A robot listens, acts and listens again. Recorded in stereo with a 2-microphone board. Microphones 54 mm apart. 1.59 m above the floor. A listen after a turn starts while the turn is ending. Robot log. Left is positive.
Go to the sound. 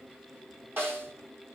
note: The snare drum: about 45° right or 135° right.
cmd yaw -45
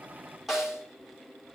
cmd fwd 1.0
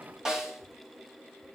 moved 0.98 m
note: The snare drum is now 10° right.
cmd yaw -10
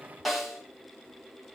cmd fwd 1.0
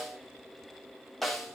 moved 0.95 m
cmd fwd 1.0
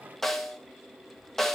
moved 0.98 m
cmd fwd 1.0
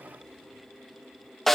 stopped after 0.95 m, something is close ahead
end: Arrived at the snare drum, straight ahead.